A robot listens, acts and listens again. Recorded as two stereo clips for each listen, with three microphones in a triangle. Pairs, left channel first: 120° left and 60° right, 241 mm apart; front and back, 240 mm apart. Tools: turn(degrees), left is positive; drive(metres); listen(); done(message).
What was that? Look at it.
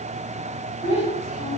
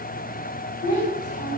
turn(degrees=60)
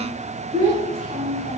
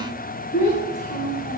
done("Found it: a child speaking, straight ahead, 2 to 4 m away.")